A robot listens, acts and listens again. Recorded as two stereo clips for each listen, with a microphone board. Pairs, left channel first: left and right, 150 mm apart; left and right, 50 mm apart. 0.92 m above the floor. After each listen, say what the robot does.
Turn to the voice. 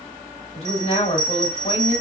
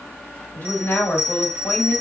Turn 40° left.
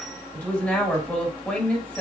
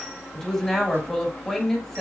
Turn 10° left.
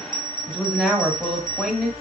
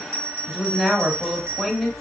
Found it: a woman speaking, straight ahead, 1 to 2 m away.